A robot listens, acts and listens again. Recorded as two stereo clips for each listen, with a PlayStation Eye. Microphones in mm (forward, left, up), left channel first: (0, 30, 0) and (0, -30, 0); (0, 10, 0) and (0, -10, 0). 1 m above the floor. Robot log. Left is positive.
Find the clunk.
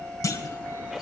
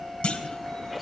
cmd yaw +90
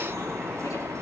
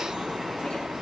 end: I heard a clunk from this way, but can't make it out now.